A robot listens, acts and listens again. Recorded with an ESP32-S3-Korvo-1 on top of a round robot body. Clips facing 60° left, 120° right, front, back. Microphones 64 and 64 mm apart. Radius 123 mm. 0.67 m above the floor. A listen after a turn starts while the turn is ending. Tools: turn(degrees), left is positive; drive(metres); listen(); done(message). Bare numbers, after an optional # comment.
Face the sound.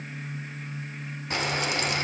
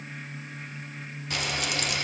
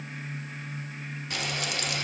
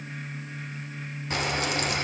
# The frying: 120° left.
turn(120)
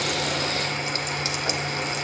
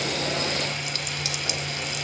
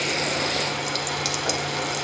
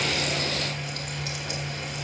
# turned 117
done("Facing the frying.")